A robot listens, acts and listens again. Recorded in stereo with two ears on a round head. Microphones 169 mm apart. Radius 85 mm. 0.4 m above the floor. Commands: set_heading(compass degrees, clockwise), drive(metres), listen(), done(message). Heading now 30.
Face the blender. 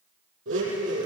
set_heading(100)
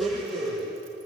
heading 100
done("Facing the blender.")